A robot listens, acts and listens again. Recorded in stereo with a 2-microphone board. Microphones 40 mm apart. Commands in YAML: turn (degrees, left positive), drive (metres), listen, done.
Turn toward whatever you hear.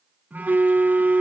turn: -50
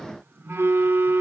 turn: -85
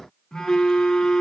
turn: 15
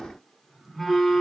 done: "Found it: a phone buzzing, straight ahead."